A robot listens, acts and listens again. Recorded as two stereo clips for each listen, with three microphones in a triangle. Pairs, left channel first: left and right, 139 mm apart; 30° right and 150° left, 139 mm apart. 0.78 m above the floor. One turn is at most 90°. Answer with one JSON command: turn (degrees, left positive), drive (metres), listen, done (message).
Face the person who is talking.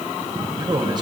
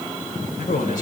{"turn": -35}
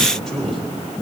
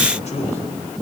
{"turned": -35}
{"done": "Facing the man speaking."}